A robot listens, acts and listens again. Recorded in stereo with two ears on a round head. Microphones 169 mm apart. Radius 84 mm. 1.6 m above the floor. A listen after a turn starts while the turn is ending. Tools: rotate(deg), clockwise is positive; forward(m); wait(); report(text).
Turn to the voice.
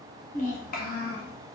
rotate(-55)
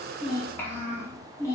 rotate(-15)
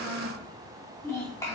rotate(-15)
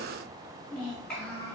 report("Found it: a child speaking, straight ahead.")